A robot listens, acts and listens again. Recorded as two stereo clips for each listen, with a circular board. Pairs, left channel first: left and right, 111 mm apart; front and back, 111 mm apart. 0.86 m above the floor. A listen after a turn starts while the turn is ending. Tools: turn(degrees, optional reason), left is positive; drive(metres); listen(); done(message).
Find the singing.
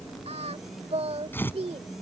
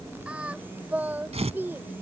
turn(degrees=-110, reason="The singing: 110° right.")
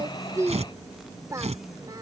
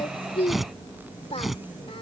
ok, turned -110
turn(degrees=-30, reason="The singing is now 30° right.")
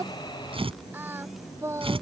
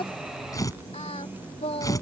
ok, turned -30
turn(degrees=-25, reason="The singing is now 25° right.")
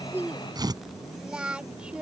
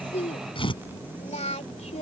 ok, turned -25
turn(degrees=-10, reason="The singing is now 10° right.")
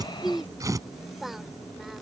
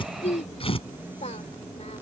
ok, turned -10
done("Facing the singing.")